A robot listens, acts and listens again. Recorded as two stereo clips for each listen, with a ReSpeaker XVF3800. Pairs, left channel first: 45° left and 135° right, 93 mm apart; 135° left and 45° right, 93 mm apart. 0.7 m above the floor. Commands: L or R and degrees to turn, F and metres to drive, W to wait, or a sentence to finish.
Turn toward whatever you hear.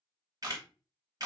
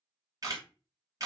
R95
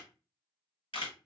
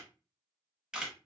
L35
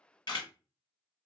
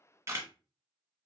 L10
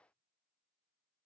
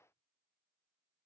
W
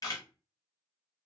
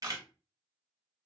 Facing the camera shutter, under 1 m away.